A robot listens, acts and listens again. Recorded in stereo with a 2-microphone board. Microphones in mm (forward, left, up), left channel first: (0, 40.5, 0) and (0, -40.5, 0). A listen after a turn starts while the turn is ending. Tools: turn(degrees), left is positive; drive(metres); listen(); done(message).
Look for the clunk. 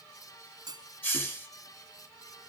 turn(degrees=-55)
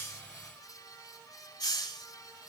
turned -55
listen()
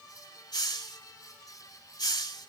done("I heard a clunk, but can't make it out now. It was about straight ahead or 70° right.")